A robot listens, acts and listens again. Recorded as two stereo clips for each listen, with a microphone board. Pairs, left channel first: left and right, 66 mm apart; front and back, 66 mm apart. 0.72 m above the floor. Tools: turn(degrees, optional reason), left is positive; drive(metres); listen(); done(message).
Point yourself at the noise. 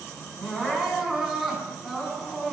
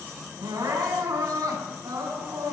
turn(degrees=-170, reason="The crying: 170° right.")
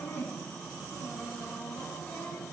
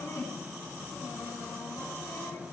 turn(degrees=30, reason="The crying is now 30° left.")
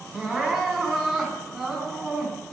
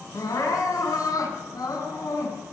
done("Found it: crying, straight ahead.")